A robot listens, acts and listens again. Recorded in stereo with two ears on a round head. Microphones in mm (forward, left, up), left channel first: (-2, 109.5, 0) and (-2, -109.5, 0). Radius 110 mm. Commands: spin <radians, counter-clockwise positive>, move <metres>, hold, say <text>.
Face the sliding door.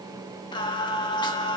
hold
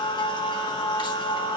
hold
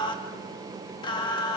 say I can't make out a sliding door, only singing.